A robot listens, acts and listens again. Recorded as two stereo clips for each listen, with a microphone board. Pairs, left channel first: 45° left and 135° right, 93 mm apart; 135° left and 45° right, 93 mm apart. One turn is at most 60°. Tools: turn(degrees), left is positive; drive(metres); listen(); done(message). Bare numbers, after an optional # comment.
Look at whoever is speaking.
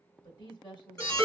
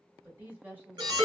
# The woman speaking: 25° left.
turn(25)
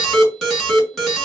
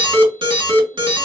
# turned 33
# Nothing new. It was at 10° right.
turn(-10)
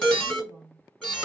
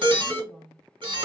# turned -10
done("Found it: a woman speaking, straight ahead, 2 to 4 m away.")